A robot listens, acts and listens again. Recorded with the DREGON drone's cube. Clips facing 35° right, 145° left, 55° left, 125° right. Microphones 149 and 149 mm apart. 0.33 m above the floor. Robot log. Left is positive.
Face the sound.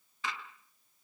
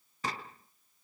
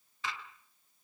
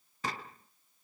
note: The gunshot: 170° right.
cmd yaw -170
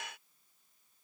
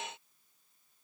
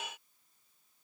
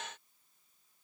end: Facing where the gunshot came from. I can't hear it now.